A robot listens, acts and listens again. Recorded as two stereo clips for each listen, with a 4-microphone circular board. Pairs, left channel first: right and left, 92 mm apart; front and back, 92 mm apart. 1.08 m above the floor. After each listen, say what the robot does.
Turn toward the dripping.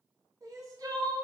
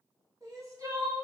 Keep listening.
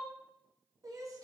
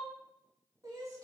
Keep listening.
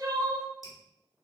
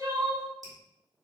Turn 140° right.
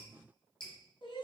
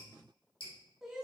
Turn 10° right.
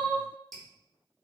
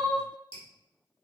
Facing the dripping, 2 to 4 m away.